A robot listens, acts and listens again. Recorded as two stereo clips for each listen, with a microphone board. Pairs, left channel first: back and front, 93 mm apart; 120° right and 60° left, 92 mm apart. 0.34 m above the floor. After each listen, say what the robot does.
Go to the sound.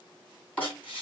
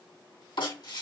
Turn 110° right.
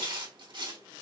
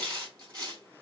Turn 10° left.
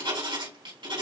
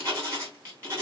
Drive 1.0 m forward.
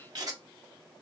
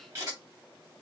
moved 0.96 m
Turn 10° left.
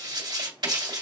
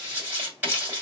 Drive 1.0 m forward.
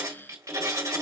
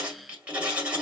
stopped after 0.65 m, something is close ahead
Turn 10° right.
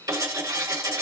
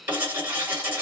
I am next to the writing.